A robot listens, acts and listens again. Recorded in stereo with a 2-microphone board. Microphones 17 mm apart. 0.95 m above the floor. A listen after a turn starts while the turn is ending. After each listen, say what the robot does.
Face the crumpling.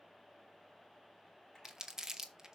Turn 30° right.
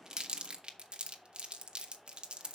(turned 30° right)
Turn 120° right.
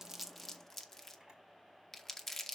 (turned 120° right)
Turn 20° left.
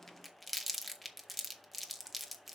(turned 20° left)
Facing the crumpling, 1 to 2 m away.